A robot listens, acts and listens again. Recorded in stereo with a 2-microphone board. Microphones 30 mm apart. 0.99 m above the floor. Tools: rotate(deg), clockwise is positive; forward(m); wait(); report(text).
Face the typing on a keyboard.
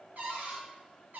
wait()
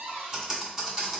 rotate(25)
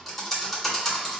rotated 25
report("Found it: typing on a keyboard, straight ahead, 1 to 2 m away.")